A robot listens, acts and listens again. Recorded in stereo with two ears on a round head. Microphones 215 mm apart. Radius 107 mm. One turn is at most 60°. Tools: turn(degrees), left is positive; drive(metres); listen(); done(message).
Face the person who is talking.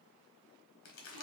listen()
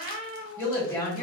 turn(degrees=30)
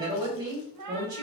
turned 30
turn(degrees=-20)
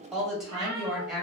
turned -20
done("Facing the woman speaking.")